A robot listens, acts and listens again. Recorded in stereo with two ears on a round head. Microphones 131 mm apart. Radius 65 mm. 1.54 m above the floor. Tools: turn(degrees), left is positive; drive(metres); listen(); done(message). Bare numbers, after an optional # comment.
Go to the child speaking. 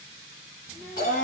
# The child speaking: about 55° left or 125° left.
turn(55)
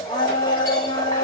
listen()
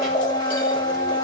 listen()
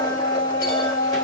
done("I heard a child speaking, but can't make it out now. It was about straight ahead or 70° left. I did not reach it.")